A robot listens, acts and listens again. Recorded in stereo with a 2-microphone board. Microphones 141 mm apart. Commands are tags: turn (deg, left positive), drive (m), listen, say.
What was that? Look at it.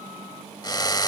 <turn deg="30"/>
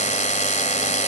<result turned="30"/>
<turn deg="120"/>
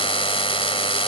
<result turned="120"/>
<turn deg="40"/>
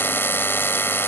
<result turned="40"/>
<turn deg="15"/>
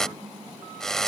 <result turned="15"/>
<say>Found it: a drill, straight ahead.</say>